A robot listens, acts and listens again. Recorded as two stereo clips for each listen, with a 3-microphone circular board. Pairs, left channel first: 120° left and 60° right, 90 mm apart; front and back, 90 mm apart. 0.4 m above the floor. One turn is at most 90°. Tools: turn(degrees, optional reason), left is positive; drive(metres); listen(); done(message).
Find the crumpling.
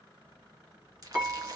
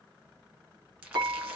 turn(degrees=-90, reason="The crumpling: 105° right.")
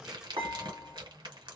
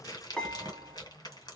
turn(degrees=-40, reason="The crumpling is now 40° right.")
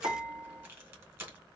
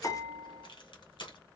done("Found it: crumpling, straight ahead, 1 to 2 m away.")